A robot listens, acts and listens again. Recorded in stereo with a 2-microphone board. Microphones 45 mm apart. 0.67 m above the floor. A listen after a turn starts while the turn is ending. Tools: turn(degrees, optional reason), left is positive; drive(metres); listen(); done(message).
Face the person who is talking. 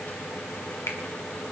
listen()
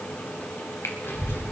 turn(degrees=60, reason="The child speaking: about 60° left or 120° left.")
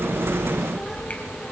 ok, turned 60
done("Found it: a child speaking, straight ahead.")